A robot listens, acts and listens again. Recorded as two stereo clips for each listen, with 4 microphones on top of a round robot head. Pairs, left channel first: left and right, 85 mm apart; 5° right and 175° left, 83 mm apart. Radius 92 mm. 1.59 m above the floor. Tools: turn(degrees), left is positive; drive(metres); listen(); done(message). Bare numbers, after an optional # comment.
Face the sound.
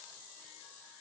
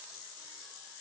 listen()
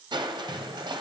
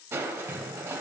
# The crushing: 125° right.
turn(-125)
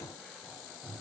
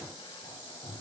done("Facing the crushing, under 1 m away.")